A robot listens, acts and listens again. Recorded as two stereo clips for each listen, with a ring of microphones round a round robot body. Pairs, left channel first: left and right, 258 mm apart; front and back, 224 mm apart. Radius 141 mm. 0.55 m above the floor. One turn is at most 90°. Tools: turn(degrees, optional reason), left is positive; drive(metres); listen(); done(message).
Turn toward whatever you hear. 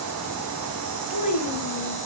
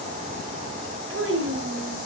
turn(degrees=90, reason="The child speaking: 150° left.")
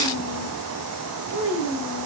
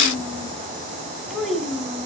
turn(degrees=90, reason="The child speaking is now 90° left.")
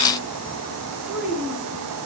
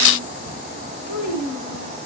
done("Facing the child speaking.")